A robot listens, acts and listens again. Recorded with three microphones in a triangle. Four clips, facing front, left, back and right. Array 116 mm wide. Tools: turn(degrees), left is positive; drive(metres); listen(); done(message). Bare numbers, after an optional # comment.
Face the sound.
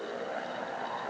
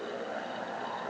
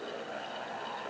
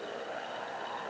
listen()
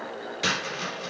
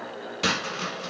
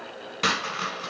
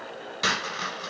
# The dropped coin: 165° right.
turn(-165)
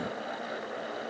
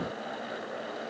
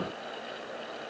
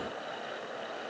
done("I heard a dropped coin from this way, but can't make it out now.")